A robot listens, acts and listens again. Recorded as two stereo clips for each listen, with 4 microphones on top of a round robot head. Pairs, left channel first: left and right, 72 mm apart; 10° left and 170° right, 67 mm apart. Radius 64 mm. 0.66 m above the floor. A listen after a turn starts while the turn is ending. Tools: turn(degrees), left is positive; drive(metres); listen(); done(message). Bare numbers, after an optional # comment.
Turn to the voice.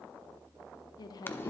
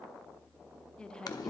# The woman speaking: 85° left.
turn(85)
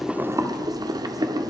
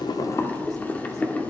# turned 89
listen()
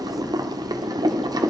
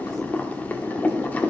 listen()
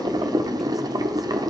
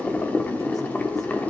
done("Facing where the woman speaking came from. I can't hear it now.")